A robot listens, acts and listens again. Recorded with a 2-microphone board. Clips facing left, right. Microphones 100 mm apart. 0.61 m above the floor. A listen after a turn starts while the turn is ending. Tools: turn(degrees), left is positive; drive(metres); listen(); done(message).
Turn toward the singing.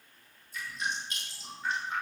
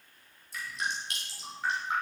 listen()
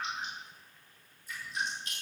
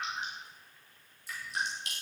listen()
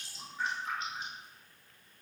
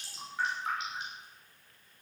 done("I can't make out singing, only dripping.")